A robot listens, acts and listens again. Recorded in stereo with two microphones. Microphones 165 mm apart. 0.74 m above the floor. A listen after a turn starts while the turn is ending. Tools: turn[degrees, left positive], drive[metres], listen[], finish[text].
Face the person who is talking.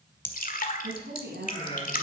Action: turn[-90]
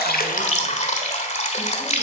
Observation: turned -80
Thought: Nothing new. It was at 10° right.
Action: turn[-10]
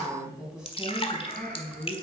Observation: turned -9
Action: finish[Facing the woman speaking, over 4 m away.]